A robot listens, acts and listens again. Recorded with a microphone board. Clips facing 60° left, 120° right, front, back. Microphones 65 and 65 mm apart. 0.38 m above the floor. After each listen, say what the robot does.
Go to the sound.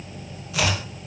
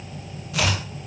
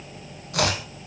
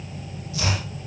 Turn 30° right.
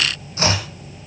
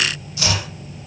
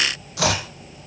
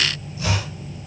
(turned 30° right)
Drive 1.0 m forward.
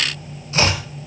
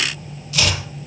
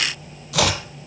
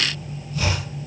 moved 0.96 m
Drive 1.0 m forward.
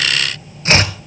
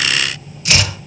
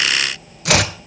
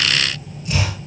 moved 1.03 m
Drive 1.0 m forward.
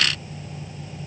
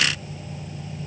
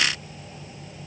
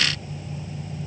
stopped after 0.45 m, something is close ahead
Keep listening.
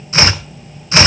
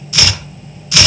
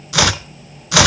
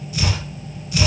I am next to the chopping.